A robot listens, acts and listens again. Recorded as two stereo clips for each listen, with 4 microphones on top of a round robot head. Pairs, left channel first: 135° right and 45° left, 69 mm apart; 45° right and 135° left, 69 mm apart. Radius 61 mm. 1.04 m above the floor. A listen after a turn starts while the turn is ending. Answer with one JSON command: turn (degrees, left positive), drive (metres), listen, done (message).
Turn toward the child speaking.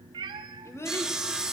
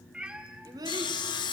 {"turn": 170}
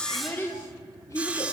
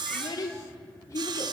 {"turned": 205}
{"turn": -90}
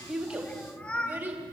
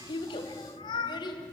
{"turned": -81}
{"turn": -20}
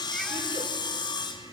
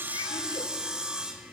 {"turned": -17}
{"listen": true}
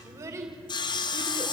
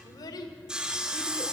{"done": "Facing the child speaking."}